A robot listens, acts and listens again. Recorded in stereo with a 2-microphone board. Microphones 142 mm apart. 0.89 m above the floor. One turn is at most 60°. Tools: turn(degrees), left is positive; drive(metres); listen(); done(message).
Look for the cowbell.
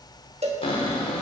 turn(degrees=-45)
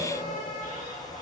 listen()
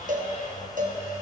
turn(degrees=-60)
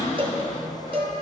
turn(degrees=-40)
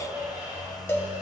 turn(degrees=20)
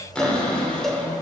done("Facing the cowbell.")